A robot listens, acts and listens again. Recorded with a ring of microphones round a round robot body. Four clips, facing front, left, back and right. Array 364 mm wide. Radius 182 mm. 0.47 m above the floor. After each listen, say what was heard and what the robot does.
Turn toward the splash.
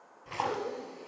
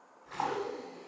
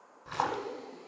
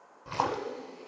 The splash: 100° right. Turn 100° right.
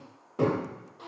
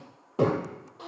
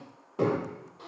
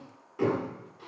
I heard a splash from this way, but can't make it out now.